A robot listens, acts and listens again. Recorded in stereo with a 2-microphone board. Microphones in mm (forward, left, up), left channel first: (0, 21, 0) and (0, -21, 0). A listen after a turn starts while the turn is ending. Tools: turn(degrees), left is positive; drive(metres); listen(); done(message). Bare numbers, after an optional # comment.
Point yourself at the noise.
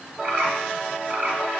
# The bird: about 60° right or 120° right.
turn(-60)
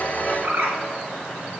# So it is at 60° right.
turn(-60)
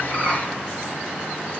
listen()
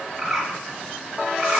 done("Found it: a bird, straight ahead.")